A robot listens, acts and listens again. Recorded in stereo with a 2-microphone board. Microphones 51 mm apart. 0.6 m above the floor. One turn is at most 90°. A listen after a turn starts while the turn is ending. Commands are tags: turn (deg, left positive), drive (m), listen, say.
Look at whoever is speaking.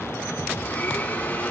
<listen/>
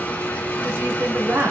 <turn deg="-55"/>
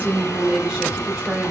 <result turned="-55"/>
<turn deg="-15"/>
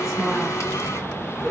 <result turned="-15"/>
<listen/>
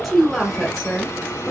<say>Facing the woman speaking, 1 to 2 m away.</say>